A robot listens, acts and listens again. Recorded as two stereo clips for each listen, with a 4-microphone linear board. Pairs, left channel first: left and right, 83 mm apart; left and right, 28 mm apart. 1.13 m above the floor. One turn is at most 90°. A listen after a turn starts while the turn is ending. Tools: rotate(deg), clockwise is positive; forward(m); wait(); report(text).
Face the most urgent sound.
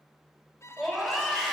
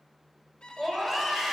rotate(-30)
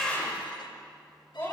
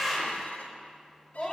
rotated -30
rotate(-90)
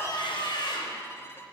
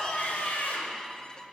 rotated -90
rotate(-65)
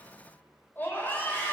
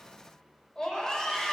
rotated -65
rotate(-20)
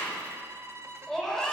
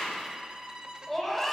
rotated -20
report("Facing the scream.")